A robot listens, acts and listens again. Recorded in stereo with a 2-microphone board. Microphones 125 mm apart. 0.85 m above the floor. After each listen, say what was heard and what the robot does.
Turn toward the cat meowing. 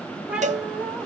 Turn 30° right.
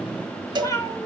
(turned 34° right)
So it is at 25° left. Turn 25° left.
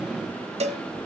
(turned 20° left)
Keep listening.
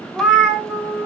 Found it: a cat meowing, straight ahead.